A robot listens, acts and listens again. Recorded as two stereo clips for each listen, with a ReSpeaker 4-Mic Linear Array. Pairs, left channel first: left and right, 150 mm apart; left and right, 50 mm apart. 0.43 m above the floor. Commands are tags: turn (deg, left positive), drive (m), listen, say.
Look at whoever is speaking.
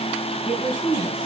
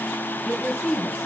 <turn deg="-30"/>
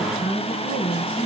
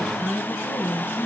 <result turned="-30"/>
<turn deg="-145"/>
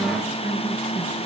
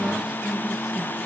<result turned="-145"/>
<listen/>
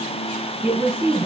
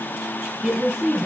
<turn deg="-20"/>
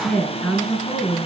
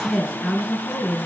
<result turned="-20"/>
<say>Found it: a woman speaking, straight ahead.</say>